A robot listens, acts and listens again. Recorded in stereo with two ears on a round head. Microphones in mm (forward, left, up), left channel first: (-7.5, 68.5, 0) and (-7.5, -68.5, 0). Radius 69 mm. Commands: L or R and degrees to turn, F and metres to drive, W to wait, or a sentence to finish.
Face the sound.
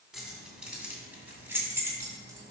R20
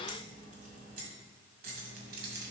R110
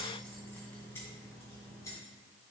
L20
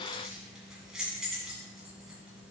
Facing the keys jangling.